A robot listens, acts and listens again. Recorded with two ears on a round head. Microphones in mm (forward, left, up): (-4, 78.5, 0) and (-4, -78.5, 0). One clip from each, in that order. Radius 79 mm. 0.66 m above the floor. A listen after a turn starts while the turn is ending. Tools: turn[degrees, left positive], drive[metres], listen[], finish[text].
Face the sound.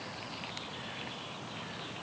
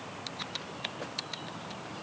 Action: listen[]
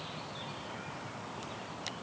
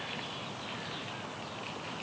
Action: listen[]
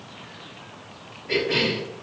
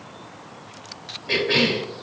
Thought: The cough: about 70° right or 110° right.
Action: turn[-70]
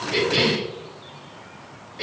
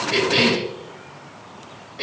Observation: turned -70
Action: finish[Found it: a cough, straight ahead.]